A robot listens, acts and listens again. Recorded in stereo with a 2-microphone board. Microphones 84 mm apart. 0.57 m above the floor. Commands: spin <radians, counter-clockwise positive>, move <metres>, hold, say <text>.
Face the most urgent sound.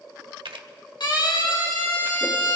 spin 1.13
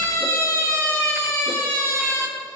spin 0.79
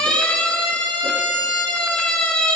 spin 0.26
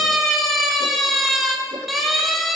say Facing the siren, 2 to 4 m away.